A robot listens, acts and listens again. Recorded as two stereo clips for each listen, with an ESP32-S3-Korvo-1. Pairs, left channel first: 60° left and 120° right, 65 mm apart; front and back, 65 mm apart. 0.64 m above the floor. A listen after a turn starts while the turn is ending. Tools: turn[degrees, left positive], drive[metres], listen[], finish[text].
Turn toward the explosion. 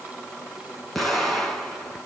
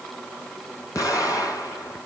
Thought: The explosion: 25° right.
Action: turn[-25]
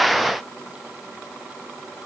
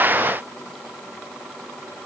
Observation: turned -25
Action: finish[Facing where the explosion came from. I can't hear it now.]